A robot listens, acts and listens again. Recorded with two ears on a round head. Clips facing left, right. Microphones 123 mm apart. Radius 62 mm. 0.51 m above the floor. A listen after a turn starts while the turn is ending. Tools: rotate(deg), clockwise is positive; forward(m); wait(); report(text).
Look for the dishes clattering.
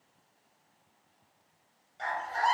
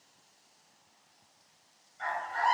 wait()
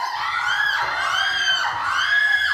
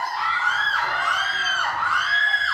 wait()
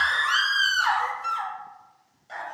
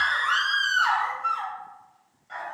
report("I can't make out dishes clattering to turn to.")